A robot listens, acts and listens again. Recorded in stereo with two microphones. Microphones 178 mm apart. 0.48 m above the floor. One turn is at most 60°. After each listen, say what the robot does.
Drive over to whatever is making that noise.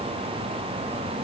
Keep listening.
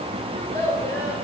Turn 15° left.
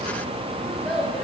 Drive 1.0 m forward.
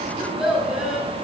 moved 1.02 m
Drive 1.0 m forward.
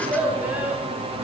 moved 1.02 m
Turn 10° right.
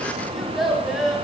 Drive 1.0 m forward.
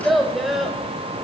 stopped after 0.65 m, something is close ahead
Arrived at the child speaking, straight ahead.